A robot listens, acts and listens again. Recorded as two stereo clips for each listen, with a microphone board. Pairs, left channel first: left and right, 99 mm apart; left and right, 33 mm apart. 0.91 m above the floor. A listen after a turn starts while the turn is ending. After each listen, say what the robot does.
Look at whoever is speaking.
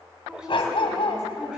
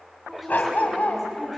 Turn 30° right.
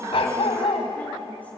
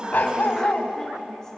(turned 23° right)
Keep listening.
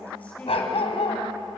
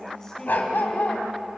Turn 15° left.
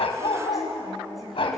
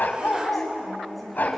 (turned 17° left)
Found it: a woman speaking, straight ahead, over 4 m away.